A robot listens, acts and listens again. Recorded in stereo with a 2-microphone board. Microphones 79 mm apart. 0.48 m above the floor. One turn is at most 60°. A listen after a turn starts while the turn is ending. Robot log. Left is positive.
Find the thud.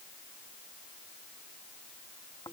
cmd idle
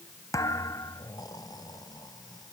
note: The thud: about 45° left or 135° left.
cmd yaw +45
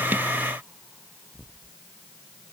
cmd idle
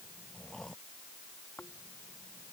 end: I heard a thud, but can't make it out now. It was about straight ahead or 90° left.